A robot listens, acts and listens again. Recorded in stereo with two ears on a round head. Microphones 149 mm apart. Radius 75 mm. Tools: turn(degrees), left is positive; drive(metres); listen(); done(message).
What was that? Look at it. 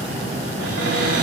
turn(degrees=-70)
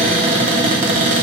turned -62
turn(degrees=-40)
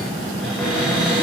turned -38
done("Found it: a cupboard door, straight ahead, under 1 m away.")